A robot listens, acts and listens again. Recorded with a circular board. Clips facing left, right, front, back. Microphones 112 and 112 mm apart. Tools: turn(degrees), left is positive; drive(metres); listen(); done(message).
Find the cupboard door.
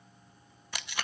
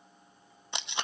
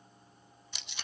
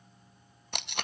listen()
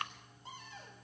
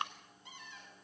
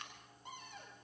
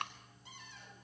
turn(degrees=40)
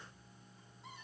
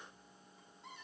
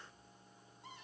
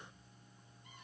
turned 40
done("Found it: a cupboard door, straight ahead, over 4 m away.")